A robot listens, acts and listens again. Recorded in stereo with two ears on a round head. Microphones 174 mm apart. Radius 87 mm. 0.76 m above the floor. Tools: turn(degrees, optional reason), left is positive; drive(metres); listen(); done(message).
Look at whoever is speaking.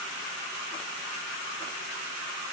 listen()
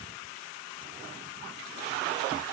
listen()
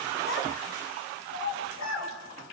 turn(degrees=90)
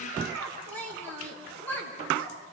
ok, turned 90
turn(degrees=10, reason="So it is at 10° left.")
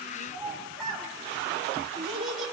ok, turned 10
done("Facing the child speaking, over 4 m away.")